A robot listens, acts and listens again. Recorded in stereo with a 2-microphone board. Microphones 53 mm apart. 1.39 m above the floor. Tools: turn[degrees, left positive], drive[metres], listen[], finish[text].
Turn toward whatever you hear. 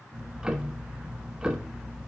Action: turn[-30]
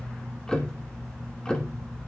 Thought: So it is at 20° left.
Action: turn[20]
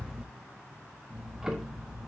Thought: The ticking is now 10° right.
Action: turn[-10]
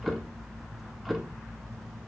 Action: finish[Facing the ticking.]